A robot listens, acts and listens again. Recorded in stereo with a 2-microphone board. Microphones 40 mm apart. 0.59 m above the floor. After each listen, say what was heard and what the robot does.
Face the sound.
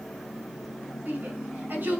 The shout: about 60° right or 120° right. Turn 60° right.
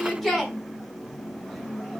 Facing the shout.